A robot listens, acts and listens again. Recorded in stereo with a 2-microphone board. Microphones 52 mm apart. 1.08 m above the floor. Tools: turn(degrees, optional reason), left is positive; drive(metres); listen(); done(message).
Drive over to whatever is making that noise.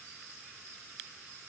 listen()
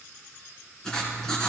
turn(degrees=30)
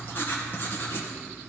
turn(degrees=140, reason="So it is at 140° left.")
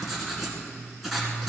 drive(metres=1.0)
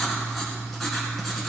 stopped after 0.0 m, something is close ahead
done("Something is in my way. I am facing the writing but have not reached it.")